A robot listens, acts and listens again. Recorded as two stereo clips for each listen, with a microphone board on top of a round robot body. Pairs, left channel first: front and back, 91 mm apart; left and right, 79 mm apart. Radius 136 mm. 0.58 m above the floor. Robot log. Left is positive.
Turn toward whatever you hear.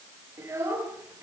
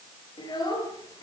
note: The child speaking: 120° left.
cmd yaw +120
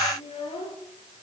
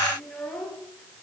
end: Facing the child speaking.